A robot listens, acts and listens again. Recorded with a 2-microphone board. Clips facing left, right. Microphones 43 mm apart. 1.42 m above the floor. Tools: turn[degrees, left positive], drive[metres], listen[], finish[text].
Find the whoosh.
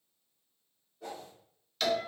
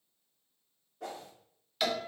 Thought: The whoosh: about 75° right or 105° right.
Action: turn[-75]
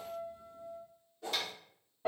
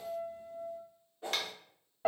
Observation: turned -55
Thought: So it is at 30° right.
Action: turn[-30]
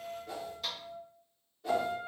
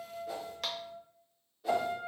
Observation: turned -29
Action: finish[Found it: a whoosh, straight ahead.]